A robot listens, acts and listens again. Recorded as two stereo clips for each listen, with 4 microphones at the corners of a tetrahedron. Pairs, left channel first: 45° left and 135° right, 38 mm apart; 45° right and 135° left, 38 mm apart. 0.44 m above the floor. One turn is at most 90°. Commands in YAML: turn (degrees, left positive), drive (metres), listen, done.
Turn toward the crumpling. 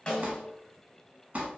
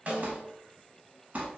turn: 90
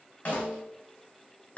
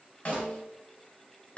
turn: 90
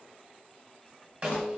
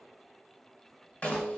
listen: true
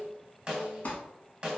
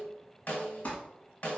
done: "Facing the crumpling."